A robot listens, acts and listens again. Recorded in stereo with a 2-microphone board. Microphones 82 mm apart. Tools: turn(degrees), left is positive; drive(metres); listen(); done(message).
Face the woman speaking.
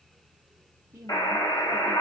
turn(degrees=-35)
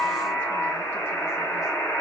listen()
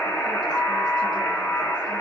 listen()
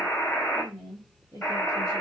turn(degrees=90)
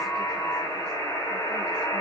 listen()
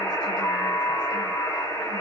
listen()
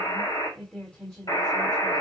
turn(degrees=20)
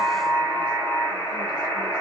listen()
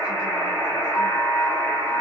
listen()
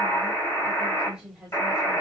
done("Found it: a woman speaking, straight ahead.")